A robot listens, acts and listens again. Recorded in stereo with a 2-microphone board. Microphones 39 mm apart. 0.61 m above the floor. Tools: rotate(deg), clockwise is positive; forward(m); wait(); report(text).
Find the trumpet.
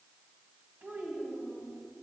wait()
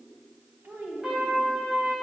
rotate(30)
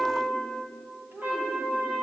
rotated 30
rotate(135)
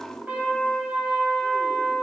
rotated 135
rotate(45)
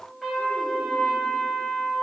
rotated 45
report("Facing the trumpet, 2 to 4 m away.")